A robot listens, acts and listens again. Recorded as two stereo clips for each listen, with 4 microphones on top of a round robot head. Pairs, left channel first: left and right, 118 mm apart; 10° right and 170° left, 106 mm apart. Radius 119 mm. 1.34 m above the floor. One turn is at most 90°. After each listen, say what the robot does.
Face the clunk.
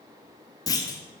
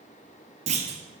Turn 90° left.
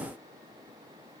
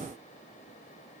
Turn 60° left.
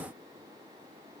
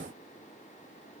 Facing where the clunk came from. I can't hear it now.